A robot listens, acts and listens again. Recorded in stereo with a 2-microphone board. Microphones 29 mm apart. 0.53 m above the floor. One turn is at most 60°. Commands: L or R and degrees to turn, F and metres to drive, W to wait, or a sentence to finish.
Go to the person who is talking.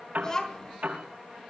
L25
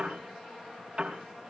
W
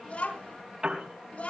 L60
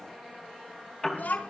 L60
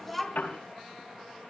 F1.0
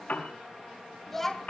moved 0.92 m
F1.0
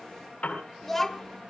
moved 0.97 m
F1.0
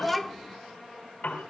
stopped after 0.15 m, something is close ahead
I am next to the child speaking.